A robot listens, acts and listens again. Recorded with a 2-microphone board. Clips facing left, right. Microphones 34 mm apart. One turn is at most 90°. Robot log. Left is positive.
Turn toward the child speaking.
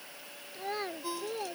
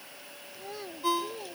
note: The child speaking: about 50° left or 130° left.
cmd yaw +50
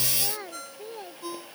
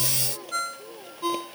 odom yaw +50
note: So it is at 70° left.
cmd yaw +70
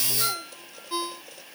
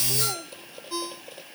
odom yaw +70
cmd idle
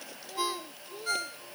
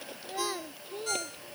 note: The child speaking is now 25° right.
cmd yaw -25
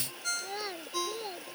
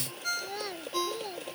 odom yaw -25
note: The child speaking is now 10° left.
cmd yaw +10
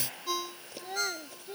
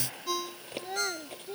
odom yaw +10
end: Found it: a child speaking, straight ahead.